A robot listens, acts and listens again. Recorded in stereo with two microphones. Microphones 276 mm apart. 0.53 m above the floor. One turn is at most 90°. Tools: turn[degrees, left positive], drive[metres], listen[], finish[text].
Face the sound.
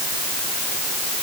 Action: listen[]
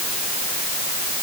Action: listen[]
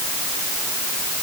Action: finish[I can't make out anything.]